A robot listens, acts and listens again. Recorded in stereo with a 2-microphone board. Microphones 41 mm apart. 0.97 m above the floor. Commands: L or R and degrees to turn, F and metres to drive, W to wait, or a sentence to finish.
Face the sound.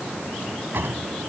R65
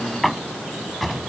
Facing the drawer.